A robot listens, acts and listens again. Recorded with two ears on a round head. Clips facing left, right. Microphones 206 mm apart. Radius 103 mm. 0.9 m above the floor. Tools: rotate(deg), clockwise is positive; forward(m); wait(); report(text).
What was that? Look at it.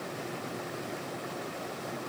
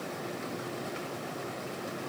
wait()
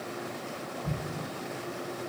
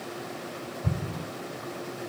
rotate(30)
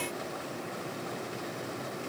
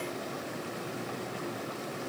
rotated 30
wait()
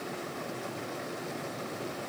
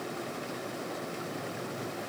report("I heard an explosion, but can't make it out now. It was about straight ahead or 120° right.")